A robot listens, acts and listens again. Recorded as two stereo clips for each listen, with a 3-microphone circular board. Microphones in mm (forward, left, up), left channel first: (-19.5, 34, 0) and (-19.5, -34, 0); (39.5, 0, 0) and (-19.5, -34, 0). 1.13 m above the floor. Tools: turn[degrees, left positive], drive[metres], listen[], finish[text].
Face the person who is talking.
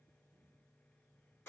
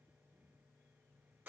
Action: listen[]
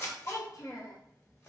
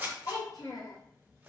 Thought: The child speaking: 55° left.
Action: turn[55]
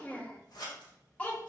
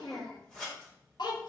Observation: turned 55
Thought: The child speaking is now 20° left.
Action: turn[20]
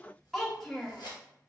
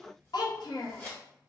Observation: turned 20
Action: finish[Facing the child speaking, under 1 m away.]